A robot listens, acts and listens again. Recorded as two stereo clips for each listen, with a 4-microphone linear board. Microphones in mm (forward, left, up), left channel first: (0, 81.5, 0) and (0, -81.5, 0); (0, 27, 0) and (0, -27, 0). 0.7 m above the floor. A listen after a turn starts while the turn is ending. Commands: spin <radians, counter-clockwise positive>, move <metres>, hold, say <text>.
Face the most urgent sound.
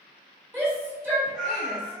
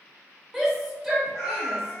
spin -0.52
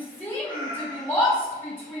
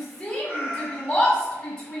spin 0.26
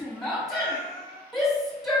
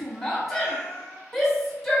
say Found it: a shout, straight ahead.